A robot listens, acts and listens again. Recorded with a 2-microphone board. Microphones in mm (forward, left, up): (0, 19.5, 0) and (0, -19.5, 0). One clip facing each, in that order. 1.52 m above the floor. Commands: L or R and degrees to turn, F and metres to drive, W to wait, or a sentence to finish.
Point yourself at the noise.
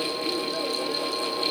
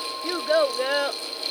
R90
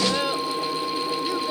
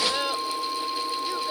Found it: a child speaking, straight ahead.